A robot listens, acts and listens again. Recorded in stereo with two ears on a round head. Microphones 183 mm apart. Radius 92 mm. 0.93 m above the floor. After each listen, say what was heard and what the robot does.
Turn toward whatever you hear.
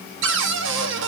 The cupboard door: about 65° right or 115° right. Turn 65° right.
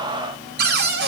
So it is at 50° right. Turn 50° right.
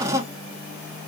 The cupboard door is now 15° right. Turn 15° right.
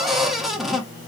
Found it: a cupboard door, straight ahead.